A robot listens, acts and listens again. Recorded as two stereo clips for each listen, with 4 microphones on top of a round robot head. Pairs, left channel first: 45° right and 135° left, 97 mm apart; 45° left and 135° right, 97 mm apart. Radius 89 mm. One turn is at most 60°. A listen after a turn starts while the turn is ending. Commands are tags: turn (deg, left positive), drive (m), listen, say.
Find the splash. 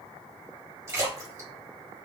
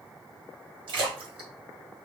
<turn deg="-60"/>
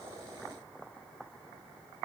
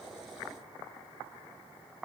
<turn deg="-60"/>
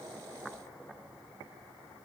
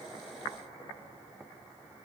<turn deg="-45"/>
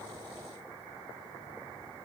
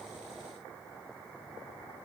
<say>I heard a splash from this way, but can't make it out now.</say>